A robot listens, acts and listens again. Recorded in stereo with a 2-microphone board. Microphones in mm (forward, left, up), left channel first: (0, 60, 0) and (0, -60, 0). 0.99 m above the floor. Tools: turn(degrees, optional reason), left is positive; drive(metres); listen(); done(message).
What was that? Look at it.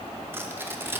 turn(degrees=-20, reason="The tearing paper: about 20° right or 160° right.")
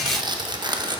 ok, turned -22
turn(degrees=-135, reason="So it is at 135° right.")
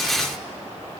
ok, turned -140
listen()
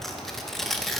done("Found it: tearing paper, straight ahead.")